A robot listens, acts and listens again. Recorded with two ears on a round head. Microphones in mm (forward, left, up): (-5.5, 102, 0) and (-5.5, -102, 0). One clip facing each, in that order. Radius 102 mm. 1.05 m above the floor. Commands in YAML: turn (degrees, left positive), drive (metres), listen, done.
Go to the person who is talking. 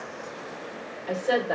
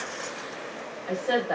turn: 30
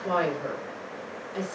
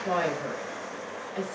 turn: 150
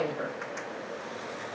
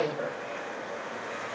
turn: 40
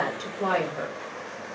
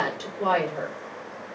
turn: 10
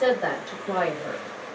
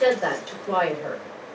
drive: 1.0
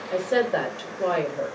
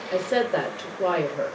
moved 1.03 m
drive: 1.0
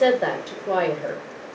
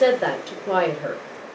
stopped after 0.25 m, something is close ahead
done: "I am next to the woman speaking."